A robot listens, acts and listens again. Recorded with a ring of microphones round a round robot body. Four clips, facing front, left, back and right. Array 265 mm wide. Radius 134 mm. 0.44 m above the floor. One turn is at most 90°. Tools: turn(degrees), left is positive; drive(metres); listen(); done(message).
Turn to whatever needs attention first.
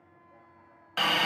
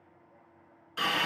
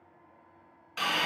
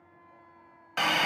listen()
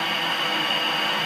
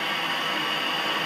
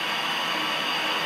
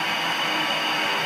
listen()
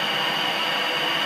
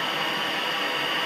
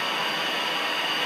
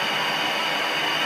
done("I can't make out anything urgent to turn to.")